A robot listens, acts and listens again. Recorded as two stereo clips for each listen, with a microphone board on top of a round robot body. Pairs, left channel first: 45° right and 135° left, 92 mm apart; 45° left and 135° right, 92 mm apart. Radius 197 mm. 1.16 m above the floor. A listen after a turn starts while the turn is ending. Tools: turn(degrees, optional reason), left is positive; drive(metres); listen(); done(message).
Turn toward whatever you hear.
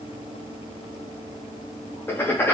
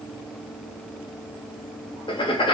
turn(degrees=20, reason="The writing: 20° left.")
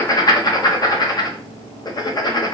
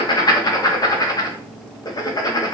done("Found it: writing, straight ahead.")